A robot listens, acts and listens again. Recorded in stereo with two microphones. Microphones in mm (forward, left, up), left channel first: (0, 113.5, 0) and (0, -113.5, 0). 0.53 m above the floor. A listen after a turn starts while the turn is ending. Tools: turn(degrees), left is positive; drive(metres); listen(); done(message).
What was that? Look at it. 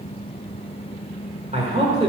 turn(degrees=-30)
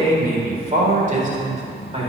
turn(degrees=-30)
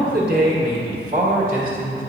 turn(degrees=-40)
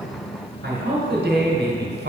turn(degrees=-115)
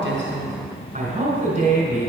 turn(degrees=-30)
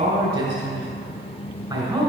turn(degrees=-10)
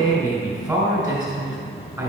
done("Found it: a man speaking, straight ahead.")